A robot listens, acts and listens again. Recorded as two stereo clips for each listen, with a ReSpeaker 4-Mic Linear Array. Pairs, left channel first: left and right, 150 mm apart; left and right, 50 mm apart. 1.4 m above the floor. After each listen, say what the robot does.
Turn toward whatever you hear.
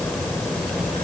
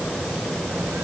Keep listening.
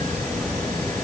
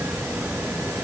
Keep listening.
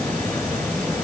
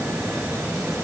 I can't make out anything.